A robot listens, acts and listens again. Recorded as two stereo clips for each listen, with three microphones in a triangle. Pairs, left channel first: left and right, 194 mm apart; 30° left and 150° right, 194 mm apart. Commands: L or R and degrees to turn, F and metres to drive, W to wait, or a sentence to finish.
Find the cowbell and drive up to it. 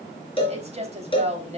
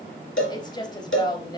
L30
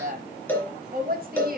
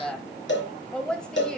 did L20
L10
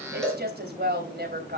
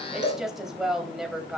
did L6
F1.0
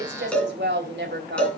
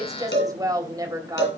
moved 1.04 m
F1.0
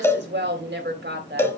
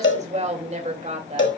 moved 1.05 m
L15
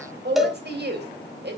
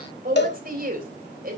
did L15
F1.0
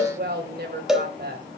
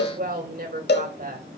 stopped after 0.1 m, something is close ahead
Arrived at the cowbell, straight ahead.